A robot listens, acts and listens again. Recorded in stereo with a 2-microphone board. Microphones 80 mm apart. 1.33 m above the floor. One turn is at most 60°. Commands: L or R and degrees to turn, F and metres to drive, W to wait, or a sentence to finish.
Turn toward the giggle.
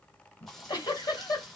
L55
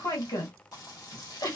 L60
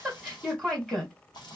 Facing the giggle, 1 to 2 m away.